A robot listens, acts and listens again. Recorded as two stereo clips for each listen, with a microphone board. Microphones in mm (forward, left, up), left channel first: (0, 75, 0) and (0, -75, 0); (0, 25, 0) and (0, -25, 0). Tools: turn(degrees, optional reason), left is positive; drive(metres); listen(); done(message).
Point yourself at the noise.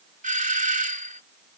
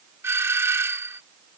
turn(degrees=-60, reason="The doorbell: about 60° right or 120° right.")
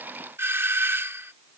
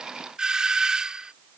turn(degrees=-20, reason="So it is at 20° right.")
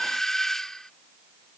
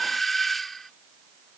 done("Facing the doorbell.")